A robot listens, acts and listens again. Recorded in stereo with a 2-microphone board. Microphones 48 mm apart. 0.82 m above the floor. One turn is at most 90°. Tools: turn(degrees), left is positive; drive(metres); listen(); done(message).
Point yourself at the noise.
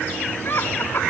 turn(degrees=45)
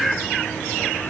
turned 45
listen()
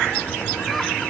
listen()
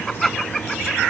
done("Facing the laughter.")